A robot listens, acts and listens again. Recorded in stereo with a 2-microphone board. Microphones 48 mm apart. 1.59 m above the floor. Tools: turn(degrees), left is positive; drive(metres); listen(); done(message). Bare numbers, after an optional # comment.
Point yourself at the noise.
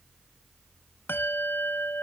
# The bell: about 50° left or 130° left.
turn(50)
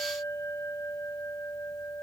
# So it is at 80° left.
turn(80)
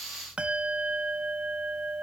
# The bell is now 25° right.
turn(-25)
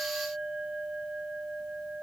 # The bell is now 15° right.
turn(-15)
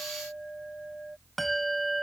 done("Facing the bell.")